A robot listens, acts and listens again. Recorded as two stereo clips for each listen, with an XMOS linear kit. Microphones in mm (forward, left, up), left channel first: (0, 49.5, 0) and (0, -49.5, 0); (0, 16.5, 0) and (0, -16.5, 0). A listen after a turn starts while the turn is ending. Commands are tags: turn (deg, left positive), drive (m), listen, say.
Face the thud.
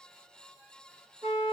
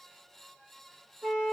<listen/>
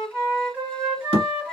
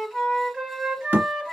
<turn deg="-90"/>
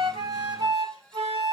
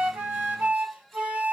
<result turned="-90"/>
<say>I heard a thud from this way, but can't make it out now.</say>